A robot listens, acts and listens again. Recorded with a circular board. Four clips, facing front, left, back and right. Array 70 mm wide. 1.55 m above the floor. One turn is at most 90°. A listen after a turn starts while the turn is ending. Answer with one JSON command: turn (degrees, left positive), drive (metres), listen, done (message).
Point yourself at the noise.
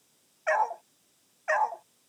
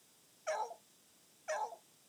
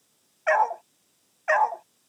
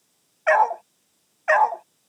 {"turn": -90}
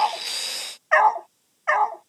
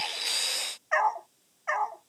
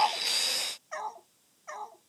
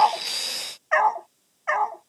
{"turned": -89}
{"turn": -15}
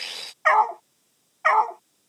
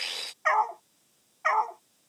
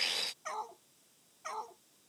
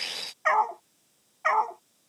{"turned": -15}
{"done": "Facing the dog barking."}